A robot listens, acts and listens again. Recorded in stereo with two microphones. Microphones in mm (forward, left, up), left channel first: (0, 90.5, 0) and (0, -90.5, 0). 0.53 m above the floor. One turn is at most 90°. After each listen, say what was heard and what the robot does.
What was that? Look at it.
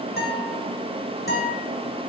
The guitar: about 65° left or 115° left. Turn 65° left.
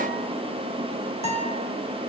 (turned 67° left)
So it is at 40° left. Turn 40° left.
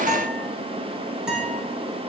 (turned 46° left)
Facing the guitar, 2 to 4 m away.